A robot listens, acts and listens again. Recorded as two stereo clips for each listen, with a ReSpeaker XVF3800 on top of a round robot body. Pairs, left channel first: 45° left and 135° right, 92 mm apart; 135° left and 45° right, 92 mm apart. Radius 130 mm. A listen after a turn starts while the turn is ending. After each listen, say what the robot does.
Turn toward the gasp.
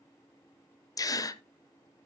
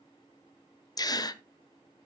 Turn 90° left.
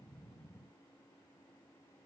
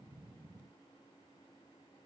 I heard a gasp from this way, but can't make it out now.